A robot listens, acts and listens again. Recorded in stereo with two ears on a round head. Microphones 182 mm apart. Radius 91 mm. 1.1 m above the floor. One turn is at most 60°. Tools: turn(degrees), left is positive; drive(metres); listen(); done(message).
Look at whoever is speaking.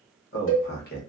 turn(degrees=50)
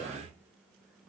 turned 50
done("Found it: a man speaking, straight ahead.")